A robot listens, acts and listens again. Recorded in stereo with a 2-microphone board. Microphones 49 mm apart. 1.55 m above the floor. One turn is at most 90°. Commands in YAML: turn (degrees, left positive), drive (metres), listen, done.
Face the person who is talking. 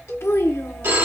turn: 65
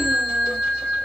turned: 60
listen: true
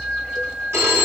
listen: true
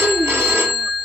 turn: 45
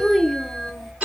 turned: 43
done: "Facing the child speaking."